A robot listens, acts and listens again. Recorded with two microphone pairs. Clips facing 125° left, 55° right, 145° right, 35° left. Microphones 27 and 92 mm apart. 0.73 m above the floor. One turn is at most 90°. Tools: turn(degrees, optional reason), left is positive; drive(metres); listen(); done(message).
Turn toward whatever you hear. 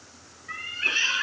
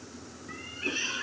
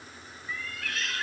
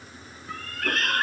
turn(degrees=70, reason="The cat meowing: 70° left.")
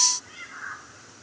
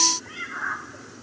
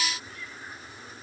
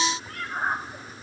turn(degrees=10, reason="The cat meowing is now 10° left.")
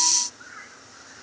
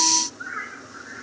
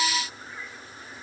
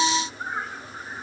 done("Facing the cat meowing.")